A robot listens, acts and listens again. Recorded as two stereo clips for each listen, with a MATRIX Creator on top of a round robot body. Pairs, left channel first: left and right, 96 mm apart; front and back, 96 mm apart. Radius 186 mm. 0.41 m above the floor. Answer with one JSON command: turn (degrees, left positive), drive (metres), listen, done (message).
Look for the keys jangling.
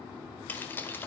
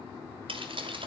{"turn": 155}
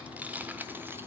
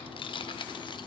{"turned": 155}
{"turn": -20}
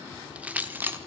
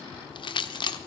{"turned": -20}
{"turn": -25}
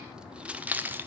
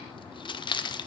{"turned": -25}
{"turn": -25}
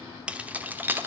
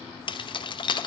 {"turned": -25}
{"turn": -25}
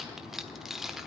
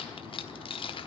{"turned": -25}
{"done": "Facing the keys jangling, 1 to 2 m away."}